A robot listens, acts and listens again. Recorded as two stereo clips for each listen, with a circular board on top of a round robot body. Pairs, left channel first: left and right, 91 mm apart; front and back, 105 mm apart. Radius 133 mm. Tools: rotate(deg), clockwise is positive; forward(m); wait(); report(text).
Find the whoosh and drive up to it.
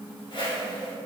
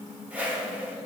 rotate(-105)
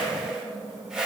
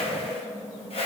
rotate(10)
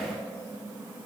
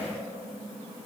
wait()
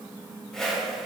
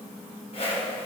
forward(1.0)
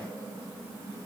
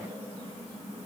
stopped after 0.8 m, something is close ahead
wait()
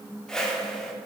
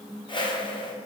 rotate(-10)
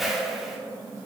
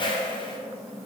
report("I am next to the whoosh.")